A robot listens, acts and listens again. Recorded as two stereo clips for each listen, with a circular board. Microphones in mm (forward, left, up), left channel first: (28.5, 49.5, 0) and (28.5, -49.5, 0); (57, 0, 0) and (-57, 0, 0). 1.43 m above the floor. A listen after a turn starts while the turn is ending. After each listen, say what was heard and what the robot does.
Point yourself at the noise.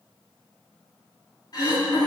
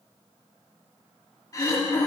The throat clearing: 50° left. Turn 50° left.
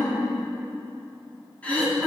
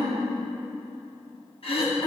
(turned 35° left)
The throat clearing is now 15° left. Turn 15° left.
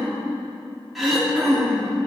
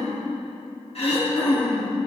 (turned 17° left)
Found it: throat clearing, straight ahead.